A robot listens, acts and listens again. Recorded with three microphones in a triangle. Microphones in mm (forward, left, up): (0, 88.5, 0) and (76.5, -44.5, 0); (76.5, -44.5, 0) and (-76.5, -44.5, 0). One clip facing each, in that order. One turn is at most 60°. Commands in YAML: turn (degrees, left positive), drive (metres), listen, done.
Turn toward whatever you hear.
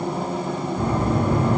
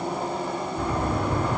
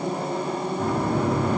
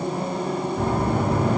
turn: 60
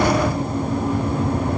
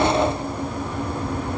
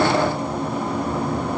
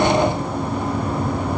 turn: 60
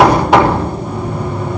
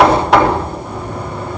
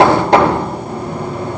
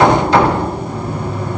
turn: 30
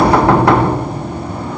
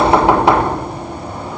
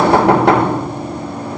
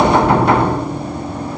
turn: 10
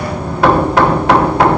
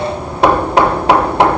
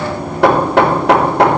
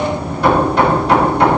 done: "Facing the knocking."